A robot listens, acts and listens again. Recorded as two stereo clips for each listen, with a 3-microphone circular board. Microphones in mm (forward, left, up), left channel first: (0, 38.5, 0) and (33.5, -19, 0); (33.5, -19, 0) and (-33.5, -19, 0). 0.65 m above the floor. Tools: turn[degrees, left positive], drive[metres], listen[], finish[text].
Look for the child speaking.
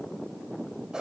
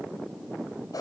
Action: listen[]
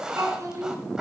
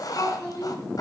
Thought: The child speaking: 20° right.
Action: turn[-20]
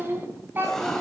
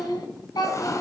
Action: finish[Facing the child speaking.]